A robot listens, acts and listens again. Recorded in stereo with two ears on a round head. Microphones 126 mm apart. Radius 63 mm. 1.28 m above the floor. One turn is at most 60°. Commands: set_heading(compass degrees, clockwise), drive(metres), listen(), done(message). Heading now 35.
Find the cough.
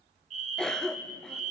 set_heading(5)
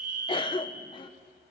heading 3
set_heading(303)
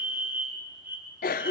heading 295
set_heading(235)
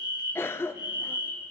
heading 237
set_heading(217)
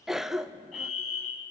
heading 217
done("Facing the cough.")